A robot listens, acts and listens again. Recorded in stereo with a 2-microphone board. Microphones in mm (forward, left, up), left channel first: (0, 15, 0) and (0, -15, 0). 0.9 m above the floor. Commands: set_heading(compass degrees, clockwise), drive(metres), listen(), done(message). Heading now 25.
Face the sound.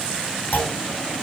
set_heading(315)
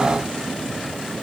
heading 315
listen()
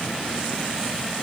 done("I heard a clunk, but can't make it out now. It was about straight ahead or 40° left.")